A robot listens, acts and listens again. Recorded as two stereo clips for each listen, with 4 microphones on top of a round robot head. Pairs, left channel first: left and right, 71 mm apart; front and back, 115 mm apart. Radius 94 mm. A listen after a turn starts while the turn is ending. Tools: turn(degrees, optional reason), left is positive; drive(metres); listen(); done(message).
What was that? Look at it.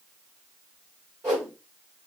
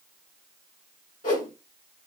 turn(degrees=-20, reason="The whoosh: 20° right.")
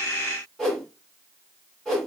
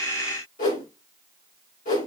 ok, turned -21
done("Facing the whoosh.")